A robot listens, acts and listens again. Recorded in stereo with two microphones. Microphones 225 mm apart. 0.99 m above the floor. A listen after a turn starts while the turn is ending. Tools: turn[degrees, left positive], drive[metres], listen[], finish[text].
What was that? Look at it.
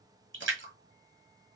Thought: The splash: about 60° right or 120° right.
Action: turn[-60]
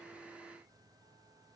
Action: listen[]
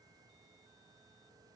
Action: finish[I heard a splash, but can't make it out now. It was about straight ahead or 60° right.]